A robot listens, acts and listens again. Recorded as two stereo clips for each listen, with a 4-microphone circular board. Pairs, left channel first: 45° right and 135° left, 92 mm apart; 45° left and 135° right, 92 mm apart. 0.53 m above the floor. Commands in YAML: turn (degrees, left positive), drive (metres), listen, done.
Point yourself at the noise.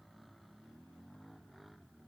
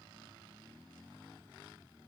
listen: true
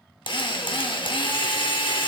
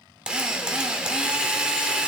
turn: -55
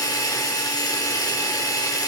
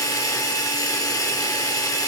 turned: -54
done: "Facing the drill, under 1 m away."